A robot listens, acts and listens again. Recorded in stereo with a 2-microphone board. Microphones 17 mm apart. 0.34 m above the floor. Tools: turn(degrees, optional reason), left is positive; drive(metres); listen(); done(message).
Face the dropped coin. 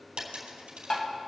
turn(degrees=-90)
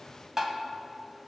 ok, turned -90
done("Facing where the dropped coin came from. I can't hear it now.")